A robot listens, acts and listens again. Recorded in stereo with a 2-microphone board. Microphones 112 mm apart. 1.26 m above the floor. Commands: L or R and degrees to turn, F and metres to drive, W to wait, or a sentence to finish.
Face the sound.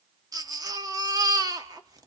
R35
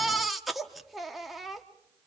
Facing the baby crying.